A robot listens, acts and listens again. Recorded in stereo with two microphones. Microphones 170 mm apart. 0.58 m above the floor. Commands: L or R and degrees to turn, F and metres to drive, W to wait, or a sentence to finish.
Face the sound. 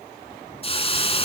L35
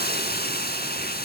L110
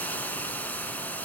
L10
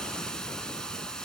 Found it: a hiss, straight ahead, 1 to 2 m away.